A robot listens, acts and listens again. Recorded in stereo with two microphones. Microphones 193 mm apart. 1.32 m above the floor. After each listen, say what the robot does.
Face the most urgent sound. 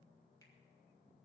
Keep listening.
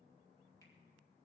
Keep listening.
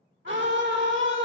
Turn 90° right.
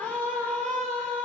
Turn 10° left.
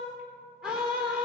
Found it: a scream, straight ahead, 2 to 4 m away.